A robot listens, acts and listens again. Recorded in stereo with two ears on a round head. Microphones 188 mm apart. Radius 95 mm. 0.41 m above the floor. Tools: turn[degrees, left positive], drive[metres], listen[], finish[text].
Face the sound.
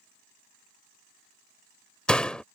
Action: turn[30]
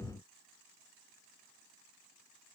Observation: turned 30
Action: listen[]
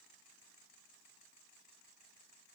Action: finish[I heard a door slam, but can't make it out now. It was about 25° right or 145° left.]